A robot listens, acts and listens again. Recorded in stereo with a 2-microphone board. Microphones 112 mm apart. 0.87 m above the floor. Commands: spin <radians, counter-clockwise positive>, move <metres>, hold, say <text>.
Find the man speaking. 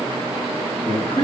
spin 1.22
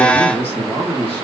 spin 0.44
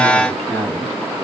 spin 0.26
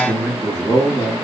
say Facing the man speaking.